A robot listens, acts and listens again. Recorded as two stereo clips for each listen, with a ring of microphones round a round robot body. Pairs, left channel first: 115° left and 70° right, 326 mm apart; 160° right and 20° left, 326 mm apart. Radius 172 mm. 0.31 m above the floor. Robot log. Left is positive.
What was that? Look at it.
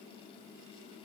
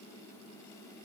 cmd idle
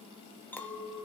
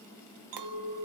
note: The clink: 30° left.
cmd yaw +30
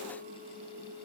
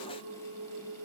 end: Found it: a clink, straight ahead, 1 to 2 m away.